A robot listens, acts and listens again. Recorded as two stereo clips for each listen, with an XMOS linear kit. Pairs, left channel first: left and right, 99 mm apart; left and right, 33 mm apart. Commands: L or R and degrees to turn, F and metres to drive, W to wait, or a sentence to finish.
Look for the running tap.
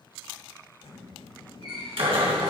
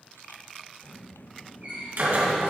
R40
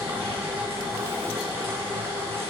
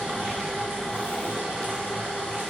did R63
W
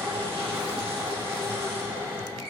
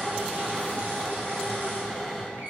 R75
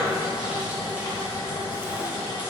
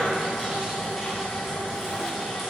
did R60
R15
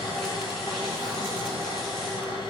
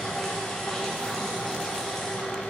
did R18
W
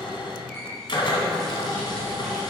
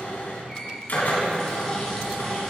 Found it: a running tap, straight ahead, 2 to 4 m away.